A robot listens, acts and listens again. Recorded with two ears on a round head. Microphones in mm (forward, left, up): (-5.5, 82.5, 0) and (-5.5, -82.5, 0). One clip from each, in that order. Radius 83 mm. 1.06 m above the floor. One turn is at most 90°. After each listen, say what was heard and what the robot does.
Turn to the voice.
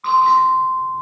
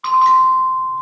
Keep listening.
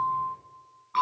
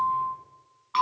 Keep listening.
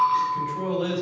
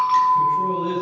Turn 90° left.
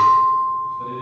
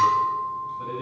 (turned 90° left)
Keep listening.
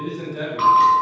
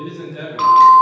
Facing the man speaking, over 4 m away.